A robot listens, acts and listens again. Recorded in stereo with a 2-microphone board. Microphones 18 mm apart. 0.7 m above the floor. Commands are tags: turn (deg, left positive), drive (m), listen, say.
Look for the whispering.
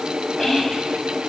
<turn deg="30"/>
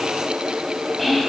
<say>Found it: whispering, straight ahead, over 4 m away.</say>